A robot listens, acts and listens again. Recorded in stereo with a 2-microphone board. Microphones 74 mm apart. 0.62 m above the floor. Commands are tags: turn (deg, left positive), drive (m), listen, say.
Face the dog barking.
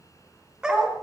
<turn deg="-30"/>
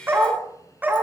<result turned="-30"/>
<turn deg="-160"/>
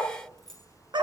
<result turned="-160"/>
<turn deg="-75"/>
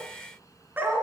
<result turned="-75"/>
<turn deg="-25"/>
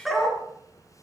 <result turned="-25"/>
<say>Found it: a dog barking, straight ahead.</say>